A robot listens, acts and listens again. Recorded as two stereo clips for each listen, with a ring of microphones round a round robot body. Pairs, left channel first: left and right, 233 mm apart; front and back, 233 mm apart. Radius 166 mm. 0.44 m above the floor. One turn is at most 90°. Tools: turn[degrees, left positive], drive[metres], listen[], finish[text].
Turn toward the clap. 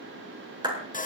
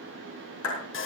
Thought: The clap: 20° right.
Action: turn[-20]
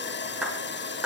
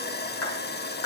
Action: finish[Facing the clap.]